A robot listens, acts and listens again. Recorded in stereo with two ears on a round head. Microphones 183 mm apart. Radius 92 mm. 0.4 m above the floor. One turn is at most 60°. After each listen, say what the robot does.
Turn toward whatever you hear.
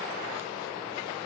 Keep listening.
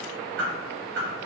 Turn 60° right.
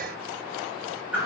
Turn 10° right.
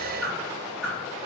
Found it: a whoosh, straight ahead, 1 to 2 m away.